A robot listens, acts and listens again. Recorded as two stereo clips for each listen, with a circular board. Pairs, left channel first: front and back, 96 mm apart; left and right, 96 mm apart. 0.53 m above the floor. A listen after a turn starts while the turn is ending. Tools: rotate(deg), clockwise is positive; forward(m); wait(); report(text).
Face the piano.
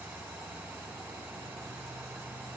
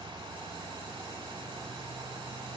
wait()
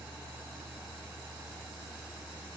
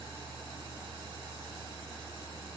wait()
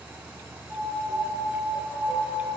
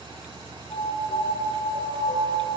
rotate(-120)
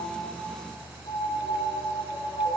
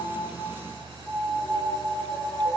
report("Found it: a piano, straight ahead.")